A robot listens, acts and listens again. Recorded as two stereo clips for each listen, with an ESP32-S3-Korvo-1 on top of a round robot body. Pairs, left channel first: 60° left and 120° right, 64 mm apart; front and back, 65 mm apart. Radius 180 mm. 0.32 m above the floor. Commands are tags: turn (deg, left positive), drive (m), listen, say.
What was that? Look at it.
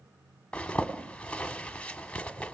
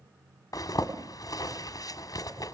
<turn deg="-15"/>
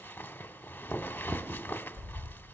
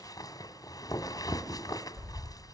<say>Facing the zipper.</say>